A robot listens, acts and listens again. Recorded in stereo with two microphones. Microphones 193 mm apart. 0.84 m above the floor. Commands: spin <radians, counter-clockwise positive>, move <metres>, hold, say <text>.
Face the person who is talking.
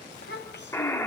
spin 1.13
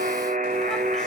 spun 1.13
hold
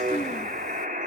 hold
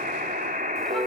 say I heard a child speaking, but can't make it out now. It was about straight ahead or 50° left.